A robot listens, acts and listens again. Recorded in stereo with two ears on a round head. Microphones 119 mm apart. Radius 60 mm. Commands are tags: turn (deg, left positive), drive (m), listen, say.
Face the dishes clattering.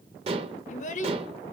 <turn deg="-40"/>
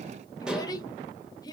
<say>Facing the dishes clattering.</say>